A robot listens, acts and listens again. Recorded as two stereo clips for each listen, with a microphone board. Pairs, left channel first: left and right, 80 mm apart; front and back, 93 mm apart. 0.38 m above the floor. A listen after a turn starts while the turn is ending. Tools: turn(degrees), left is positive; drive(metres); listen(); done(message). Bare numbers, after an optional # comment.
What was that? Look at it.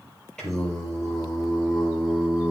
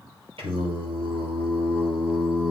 # The singing: 170° right.
turn(-170)
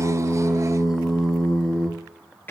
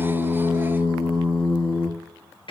# The singing is now 25° left.
turn(25)
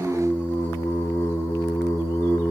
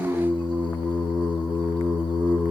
# The singing is now 30° left.
turn(30)
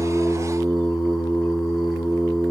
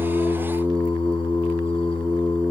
done("Facing the singing.")